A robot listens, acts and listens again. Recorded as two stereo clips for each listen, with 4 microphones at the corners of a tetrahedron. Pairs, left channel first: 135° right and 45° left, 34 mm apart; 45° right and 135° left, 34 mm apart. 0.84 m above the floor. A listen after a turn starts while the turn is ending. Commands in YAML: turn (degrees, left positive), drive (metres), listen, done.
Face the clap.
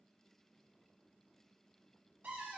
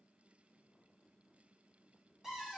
listen: true
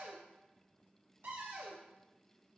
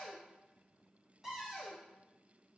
listen: true
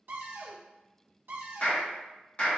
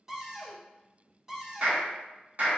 turn: 175
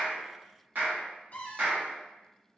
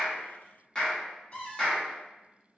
turn: 20
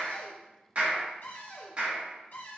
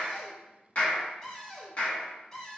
done: "Found it: a clap, straight ahead, 1 to 2 m away."